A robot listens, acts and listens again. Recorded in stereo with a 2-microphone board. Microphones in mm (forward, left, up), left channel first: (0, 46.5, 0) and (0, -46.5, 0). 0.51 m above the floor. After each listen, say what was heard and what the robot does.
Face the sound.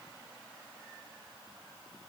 Keep listening.
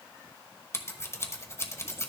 The scissors: about 30° left or 150° left. Turn 30° left.
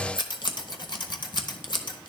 So it is at 120° left. Turn 120° left.
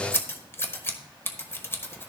The scissors is now 25° left. Turn 25° left.
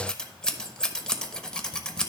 The scissors is now 10° left. Turn 10° left.
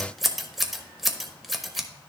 Facing the scissors, 1 to 2 m away.